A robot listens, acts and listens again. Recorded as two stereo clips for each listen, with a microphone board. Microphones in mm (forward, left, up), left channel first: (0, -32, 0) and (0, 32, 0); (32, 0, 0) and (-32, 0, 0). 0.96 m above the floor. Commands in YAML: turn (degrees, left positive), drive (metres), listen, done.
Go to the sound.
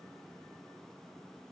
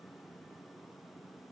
listen: true
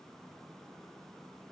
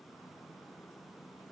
listen: true
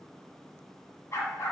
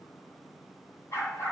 turn: -45
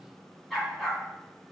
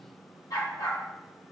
drive: 1.0
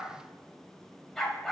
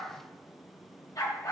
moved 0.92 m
drive: 1.0
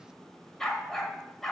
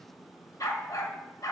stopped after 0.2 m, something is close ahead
turn: -10
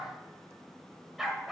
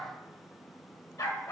done: "I am next to the dog barking."